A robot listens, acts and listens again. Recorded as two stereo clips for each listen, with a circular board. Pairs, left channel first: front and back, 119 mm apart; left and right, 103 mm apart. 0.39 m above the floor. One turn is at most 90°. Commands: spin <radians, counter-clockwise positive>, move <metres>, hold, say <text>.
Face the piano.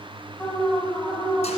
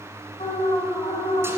hold
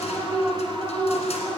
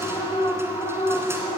hold
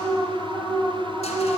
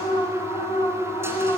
say I can't make out a piano, only an alarm.